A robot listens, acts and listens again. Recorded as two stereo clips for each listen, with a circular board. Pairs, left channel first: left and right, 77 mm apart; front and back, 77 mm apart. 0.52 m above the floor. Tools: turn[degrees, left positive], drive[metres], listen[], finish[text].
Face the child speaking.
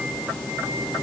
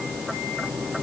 Action: listen[]
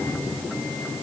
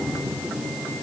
Action: listen[]
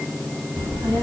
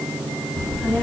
Thought: The child speaking: 75° right.
Action: turn[-75]
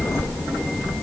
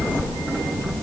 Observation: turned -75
Action: finish[Found it: a child speaking, straight ahead.]